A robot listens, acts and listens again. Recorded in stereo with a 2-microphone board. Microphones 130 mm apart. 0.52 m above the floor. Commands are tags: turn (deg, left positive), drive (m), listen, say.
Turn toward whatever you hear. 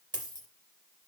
<turn deg="-35"/>
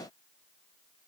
<listen/>
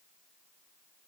<say>I heard a dropped coin, but can't make it out now. It was about straight ahead or 110° right.</say>